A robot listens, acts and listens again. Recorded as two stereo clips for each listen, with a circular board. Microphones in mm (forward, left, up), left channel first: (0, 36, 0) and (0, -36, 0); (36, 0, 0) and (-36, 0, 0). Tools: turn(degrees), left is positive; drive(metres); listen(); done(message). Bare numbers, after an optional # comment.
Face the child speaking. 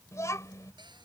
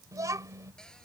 # The child speaking: 135° left.
turn(135)
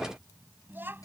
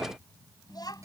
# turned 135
# The child speaking is now 30° right.
turn(-30)
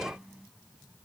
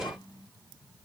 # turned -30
done("Facing the child speaking.")